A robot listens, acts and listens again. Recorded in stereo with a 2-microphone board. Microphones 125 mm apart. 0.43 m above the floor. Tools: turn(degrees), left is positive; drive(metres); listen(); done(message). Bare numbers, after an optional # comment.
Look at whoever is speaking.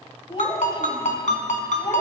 # The child speaking: about 45° left or 135° left.
turn(45)
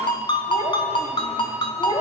# So it is at 55° left.
turn(55)
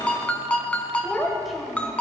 done("Found it: a child speaking, straight ahead, 1 to 2 m away.")